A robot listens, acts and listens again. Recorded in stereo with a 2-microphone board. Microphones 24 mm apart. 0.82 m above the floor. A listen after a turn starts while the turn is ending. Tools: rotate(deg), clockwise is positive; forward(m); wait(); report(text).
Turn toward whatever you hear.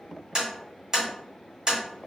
rotate(20)
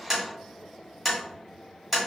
report("Found it: tapping, straight ahead, 1 to 2 m away.")